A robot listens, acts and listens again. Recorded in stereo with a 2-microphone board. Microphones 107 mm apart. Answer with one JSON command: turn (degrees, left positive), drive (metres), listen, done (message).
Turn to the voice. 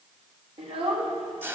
{"turn": -70}
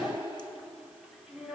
{"done": "Facing the child speaking, 1 to 2 m away."}